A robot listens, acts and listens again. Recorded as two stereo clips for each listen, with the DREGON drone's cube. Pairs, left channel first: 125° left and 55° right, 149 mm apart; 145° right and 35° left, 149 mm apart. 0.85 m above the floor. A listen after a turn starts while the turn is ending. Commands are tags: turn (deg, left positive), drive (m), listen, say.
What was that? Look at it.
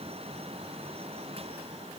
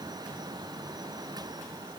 <listen/>
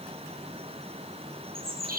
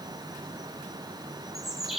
<turn deg="-55"/>
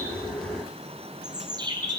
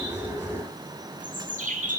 <say>Found it: a bird, straight ahead.</say>